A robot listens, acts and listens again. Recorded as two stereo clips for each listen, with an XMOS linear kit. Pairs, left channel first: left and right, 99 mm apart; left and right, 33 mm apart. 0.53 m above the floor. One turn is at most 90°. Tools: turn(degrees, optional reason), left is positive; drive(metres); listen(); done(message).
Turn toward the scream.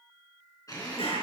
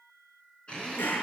listen()
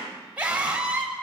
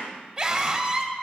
turn(degrees=-30)
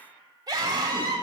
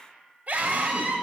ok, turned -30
turn(degrees=-90, reason="So it is at 135° right.")
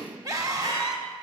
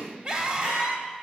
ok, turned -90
turn(degrees=-40, reason="The scream is now 40° right.")
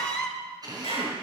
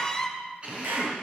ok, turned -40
turn(degrees=10, reason="The scream is now 10° left.")
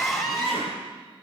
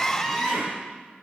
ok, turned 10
done("Facing the scream.")